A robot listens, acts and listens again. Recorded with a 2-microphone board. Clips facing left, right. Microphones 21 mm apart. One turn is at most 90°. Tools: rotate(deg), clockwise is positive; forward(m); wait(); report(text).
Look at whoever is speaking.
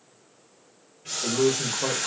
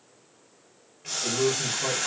rotate(-50)
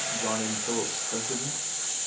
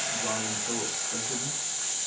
rotate(-70)
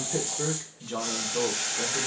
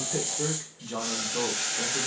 report("Found it: a man speaking, straight ahead.")